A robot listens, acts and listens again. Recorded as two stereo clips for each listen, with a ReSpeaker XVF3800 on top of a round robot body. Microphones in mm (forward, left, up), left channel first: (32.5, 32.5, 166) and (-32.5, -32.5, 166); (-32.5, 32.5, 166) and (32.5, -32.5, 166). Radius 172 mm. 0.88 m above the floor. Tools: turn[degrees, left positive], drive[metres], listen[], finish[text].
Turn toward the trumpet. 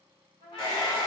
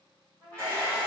Thought: The trumpet: 55° left.
Action: turn[55]
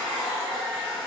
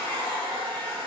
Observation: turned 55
Action: listen[]
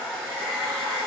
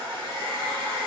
Action: listen[]
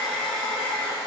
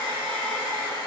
Action: finish[I heard a trumpet from this way, but can't make it out now.]